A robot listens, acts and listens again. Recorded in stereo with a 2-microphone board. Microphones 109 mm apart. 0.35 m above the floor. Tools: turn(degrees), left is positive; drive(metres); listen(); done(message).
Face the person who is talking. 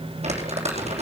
listen()
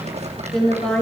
turn(degrees=30)
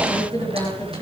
turn(degrees=140)
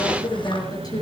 turn(degrees=35)
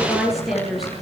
done("Facing the woman speaking, over 4 m away.")